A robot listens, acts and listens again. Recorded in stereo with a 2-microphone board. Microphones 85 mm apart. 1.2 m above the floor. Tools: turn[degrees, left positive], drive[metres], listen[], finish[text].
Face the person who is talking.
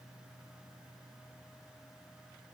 Action: listen[]
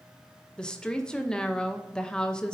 Action: turn[30]
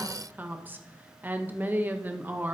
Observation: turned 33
Thought: So it is at 20° right.
Action: turn[-20]
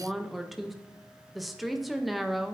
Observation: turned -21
Action: finish[Facing the woman speaking.]